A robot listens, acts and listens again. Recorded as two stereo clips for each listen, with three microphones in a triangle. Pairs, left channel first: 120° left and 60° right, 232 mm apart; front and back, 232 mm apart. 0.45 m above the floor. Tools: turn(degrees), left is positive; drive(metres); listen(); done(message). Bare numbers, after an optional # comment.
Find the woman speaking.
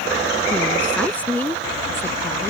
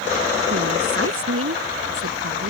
# The woman speaking: 155° right.
turn(-155)
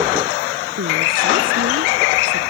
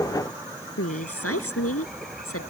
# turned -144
# The woman speaking is now 25° right.
turn(-25)
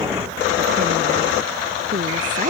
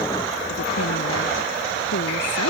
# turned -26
listen()
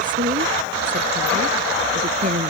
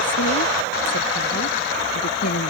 done("Facing the woman speaking.")